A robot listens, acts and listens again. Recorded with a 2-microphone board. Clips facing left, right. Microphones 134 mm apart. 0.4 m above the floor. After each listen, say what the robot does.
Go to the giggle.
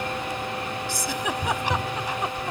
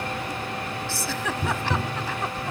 Turn 15° left.
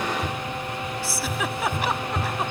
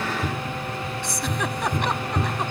Drive 1.0 m forward.
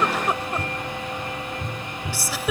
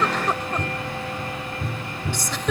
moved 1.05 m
Turn 10° left.
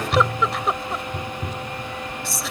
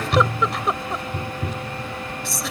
Drive 1.0 m forward.
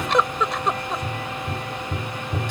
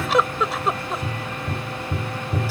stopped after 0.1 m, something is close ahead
Arrived at the giggle, straight ahead.